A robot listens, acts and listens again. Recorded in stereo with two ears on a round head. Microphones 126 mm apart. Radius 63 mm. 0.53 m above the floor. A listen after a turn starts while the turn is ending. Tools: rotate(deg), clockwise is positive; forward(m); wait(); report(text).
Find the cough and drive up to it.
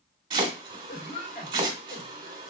rotate(-55)
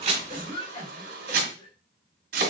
rotate(-50)
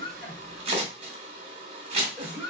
forward(1.0)
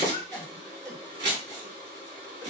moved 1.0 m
rotate(-15)
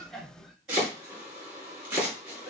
forward(1.0)
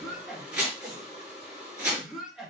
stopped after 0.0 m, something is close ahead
report("Arrived at the cough, straight ahead.")